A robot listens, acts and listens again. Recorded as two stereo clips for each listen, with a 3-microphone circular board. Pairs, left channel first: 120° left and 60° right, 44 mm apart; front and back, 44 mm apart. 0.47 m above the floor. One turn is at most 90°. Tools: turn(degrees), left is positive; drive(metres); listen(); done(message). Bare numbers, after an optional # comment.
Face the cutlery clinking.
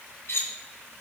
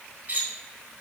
# The cutlery clinking: 130° left.
turn(90)
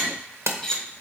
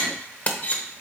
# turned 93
# The cutlery clinking is now 40° left.
turn(40)
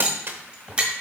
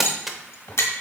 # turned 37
done("Found it: cutlery clinking, straight ahead.")